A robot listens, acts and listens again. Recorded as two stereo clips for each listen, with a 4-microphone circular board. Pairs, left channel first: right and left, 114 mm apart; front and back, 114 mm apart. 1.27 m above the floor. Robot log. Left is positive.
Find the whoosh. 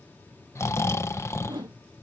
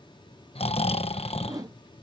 note: The whoosh: 130° left.
cmd yaw +130
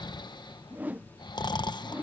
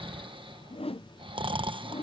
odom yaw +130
note: The whoosh is now 15° left.
cmd yaw +15
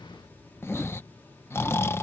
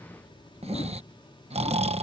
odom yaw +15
cmd idle
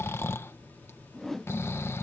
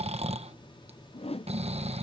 end: Facing the whoosh.